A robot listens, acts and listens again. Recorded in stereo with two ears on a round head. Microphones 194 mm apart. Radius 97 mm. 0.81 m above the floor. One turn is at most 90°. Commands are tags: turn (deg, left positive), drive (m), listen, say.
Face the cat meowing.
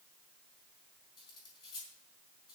<listen/>
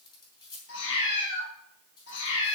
<turn deg="60"/>
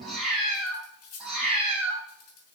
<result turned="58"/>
<say>Facing the cat meowing, over 4 m away.</say>